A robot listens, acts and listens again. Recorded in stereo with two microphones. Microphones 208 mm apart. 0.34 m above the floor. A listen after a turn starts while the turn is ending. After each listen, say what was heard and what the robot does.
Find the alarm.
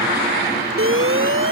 Turn 90° right.
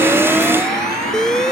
Found it: an alarm, straight ahead.